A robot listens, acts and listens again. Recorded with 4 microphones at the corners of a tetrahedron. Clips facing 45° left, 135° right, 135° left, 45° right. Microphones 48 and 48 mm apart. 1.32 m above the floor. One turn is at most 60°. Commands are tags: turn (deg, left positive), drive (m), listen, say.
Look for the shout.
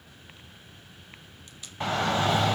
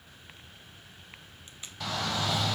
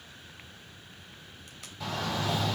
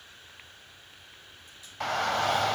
<turn deg="-10"/>
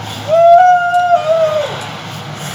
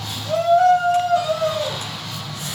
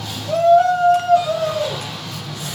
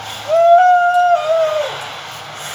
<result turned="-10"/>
<say>Facing the shout.</say>